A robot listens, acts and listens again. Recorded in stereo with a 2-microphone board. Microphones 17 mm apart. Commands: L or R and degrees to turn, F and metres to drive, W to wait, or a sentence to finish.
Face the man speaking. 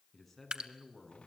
L30
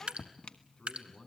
L140
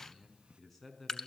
L15
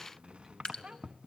Facing the man speaking.